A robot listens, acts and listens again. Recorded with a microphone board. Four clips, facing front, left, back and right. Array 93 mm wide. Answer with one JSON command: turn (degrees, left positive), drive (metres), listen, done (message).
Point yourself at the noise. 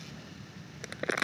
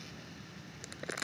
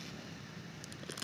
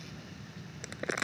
{"turn": -20}
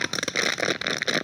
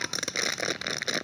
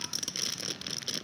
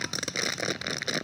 {"done": "Found it: crumpling, straight ahead."}